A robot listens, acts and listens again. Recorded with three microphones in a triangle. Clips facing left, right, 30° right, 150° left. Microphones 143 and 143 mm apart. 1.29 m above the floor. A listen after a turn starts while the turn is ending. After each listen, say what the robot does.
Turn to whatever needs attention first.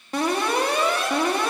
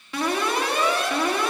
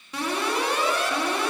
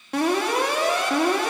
Turn 135° left.
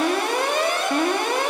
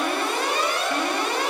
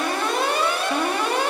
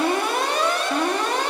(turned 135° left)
Turn 50° left.
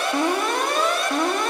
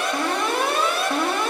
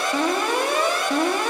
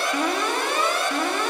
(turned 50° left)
Found it: an alarm, straight ahead.